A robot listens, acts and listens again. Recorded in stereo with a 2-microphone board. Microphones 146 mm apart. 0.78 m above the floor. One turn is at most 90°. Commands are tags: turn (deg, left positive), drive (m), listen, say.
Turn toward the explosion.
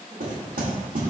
<listen/>
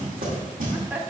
<listen/>
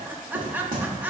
<say>I can't make out an explosion, only knocking and laughter.</say>